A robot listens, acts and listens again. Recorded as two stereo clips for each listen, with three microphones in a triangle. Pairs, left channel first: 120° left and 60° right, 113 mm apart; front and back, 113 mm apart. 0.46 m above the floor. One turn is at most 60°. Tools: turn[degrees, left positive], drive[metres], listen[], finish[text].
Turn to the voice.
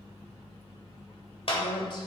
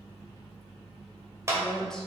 Thought: The woman speaking: 85° left.
Action: turn[60]
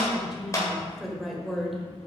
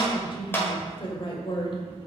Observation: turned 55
Thought: The woman speaking is now 30° left.
Action: turn[30]
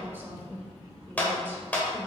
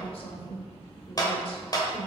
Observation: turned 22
Thought: The woman speaking is now 10° left.
Action: turn[10]
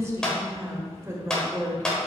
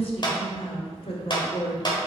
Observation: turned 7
Action: finish[Found it: a woman speaking, straight ahead, 1 to 2 m away.]